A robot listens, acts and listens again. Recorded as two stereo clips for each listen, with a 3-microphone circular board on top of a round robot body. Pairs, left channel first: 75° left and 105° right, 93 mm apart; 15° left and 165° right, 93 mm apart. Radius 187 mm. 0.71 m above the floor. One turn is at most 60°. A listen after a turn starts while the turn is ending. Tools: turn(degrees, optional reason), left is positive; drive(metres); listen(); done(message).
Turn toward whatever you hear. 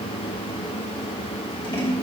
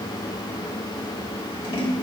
turn(degrees=45, reason="The scissors: 45° left.")
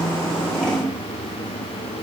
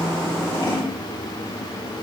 turn(degrees=-10, reason="The scissors is now 10° right.")
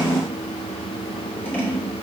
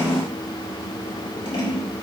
done("Found it: scissors, straight ahead, 2 to 4 m away.")